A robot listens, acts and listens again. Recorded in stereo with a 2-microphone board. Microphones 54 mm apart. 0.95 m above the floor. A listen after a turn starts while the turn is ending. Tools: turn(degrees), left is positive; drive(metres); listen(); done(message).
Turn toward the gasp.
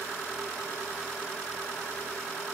listen()
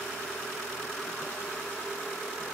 listen()
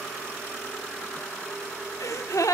turn(degrees=90)
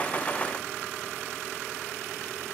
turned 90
done("I heard a gasp from this way, but can't make it out now.")